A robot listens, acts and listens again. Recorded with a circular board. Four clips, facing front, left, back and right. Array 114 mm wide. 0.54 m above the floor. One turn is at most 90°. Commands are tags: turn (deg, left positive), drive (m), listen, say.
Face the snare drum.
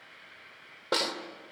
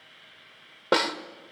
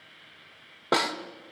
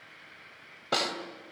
<turn deg="90"/>
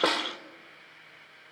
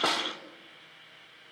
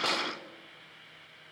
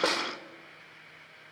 <turn deg="-15"/>
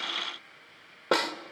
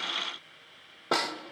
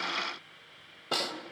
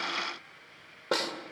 <say>Facing the snare drum.</say>